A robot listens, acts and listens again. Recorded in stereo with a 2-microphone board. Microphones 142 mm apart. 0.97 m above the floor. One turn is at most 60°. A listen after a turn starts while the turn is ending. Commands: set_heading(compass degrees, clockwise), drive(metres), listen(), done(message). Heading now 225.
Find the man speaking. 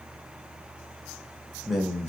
set_heading(195)
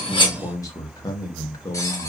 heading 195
set_heading(135)
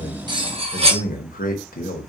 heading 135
set_heading(75)
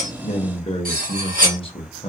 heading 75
set_heading(35)
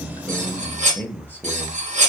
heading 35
set_heading(25)
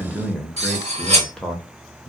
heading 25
done("Facing the man speaking.")